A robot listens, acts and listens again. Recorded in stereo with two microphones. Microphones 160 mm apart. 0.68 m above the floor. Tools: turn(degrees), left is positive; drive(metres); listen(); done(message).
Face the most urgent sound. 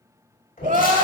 turn(degrees=-55)
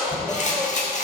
done("Facing the crying, under 1 m away.")